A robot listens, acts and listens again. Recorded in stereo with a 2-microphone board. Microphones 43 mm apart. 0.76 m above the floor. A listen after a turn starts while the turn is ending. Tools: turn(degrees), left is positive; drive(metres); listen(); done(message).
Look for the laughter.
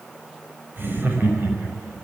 turn(degrees=-55)
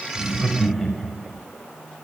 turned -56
done("Found it: laughter, straight ahead, over 4 m away.")